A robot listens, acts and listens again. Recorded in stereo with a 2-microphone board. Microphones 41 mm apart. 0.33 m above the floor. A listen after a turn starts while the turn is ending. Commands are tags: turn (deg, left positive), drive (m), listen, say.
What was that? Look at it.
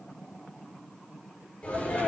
<turn deg="35"/>
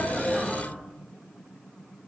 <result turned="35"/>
<say>Found it: a sneeze, straight ahead, over 4 m away.</say>